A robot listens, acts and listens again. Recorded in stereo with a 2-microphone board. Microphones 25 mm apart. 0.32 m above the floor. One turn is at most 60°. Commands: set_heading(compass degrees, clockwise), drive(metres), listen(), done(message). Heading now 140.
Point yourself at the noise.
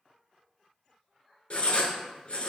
set_heading(95)
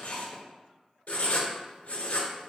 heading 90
set_heading(30)
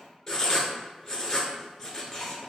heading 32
set_heading(2)
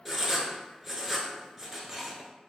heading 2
done("Facing the writing.")